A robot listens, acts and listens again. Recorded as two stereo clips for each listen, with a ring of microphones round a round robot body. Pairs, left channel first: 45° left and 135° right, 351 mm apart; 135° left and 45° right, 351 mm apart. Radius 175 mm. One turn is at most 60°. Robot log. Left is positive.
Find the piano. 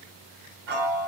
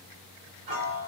note: The piano: 80° right.
cmd yaw -60
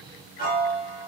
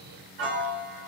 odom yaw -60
note: The piano is now 25° right.
cmd yaw -25
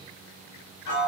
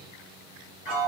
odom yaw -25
end: Facing the piano, 1 to 2 m away.